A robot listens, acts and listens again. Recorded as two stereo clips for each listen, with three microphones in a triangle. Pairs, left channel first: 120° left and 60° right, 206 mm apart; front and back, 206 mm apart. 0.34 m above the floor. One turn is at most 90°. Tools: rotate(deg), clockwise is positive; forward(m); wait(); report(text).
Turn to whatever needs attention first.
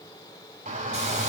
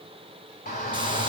rotate(25)
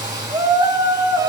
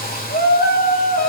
report("Facing the shout, 2 to 4 m away.")